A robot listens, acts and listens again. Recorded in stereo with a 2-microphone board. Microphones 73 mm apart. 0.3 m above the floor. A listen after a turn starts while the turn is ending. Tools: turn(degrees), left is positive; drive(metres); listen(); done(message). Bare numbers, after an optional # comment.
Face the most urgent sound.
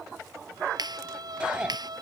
turn(-30)
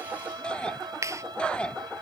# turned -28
# So it is at 15° left.
turn(15)
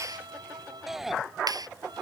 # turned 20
done("Facing the shout.")